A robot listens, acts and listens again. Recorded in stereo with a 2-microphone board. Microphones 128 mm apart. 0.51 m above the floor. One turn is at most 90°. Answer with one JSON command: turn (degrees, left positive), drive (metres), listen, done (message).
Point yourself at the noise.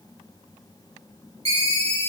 {"turn": -50}
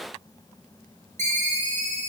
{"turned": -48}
{"turn": -80}
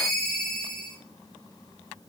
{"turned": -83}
{"done": "Facing the ringtone."}